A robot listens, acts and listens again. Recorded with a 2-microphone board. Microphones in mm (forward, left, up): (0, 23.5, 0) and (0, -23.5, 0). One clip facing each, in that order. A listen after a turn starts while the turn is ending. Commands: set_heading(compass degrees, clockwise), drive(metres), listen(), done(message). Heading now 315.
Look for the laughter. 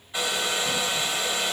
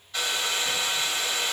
listen()
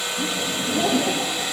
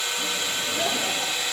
set_heading(240)
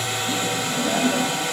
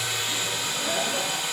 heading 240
set_heading(200)
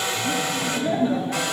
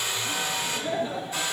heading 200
set_heading(170)
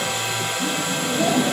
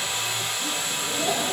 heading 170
set_heading(155)
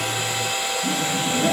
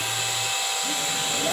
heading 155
done("Facing the laughter.")